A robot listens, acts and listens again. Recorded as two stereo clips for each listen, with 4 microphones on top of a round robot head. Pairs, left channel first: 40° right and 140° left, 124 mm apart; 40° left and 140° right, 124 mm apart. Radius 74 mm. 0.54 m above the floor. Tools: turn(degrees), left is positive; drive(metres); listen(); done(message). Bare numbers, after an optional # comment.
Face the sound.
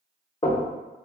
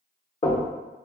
done("Facing the knocking.")